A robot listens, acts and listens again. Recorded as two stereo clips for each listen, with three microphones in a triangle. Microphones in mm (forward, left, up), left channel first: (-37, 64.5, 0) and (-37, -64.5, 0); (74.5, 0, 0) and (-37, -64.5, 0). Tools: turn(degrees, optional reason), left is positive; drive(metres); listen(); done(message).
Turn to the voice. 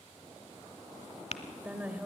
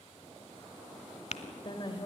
turn(degrees=-15, reason="The woman speaking: 15° right.")
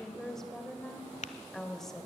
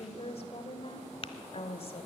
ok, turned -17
done("Found it: a woman speaking, straight ahead, 2 to 4 m away.")